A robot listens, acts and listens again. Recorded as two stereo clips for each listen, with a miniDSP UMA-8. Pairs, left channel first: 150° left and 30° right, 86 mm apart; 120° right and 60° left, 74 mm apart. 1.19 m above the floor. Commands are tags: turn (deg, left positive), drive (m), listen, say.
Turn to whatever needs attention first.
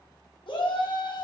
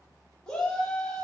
<turn deg="160"/>
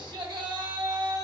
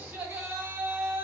<say>Found it: a shout, straight ahead, 1 to 2 m away.</say>